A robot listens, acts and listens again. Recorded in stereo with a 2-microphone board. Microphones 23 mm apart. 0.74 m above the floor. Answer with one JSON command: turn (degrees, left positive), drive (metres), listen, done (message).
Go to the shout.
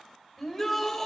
{"turn": 30}
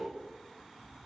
{"listen": true}
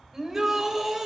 {"turn": -20}
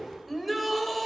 {"drive": 1.0}
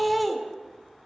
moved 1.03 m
{"drive": 1.0}
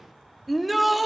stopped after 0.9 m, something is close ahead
{"done": "Arrived at the shout, straight ahead."}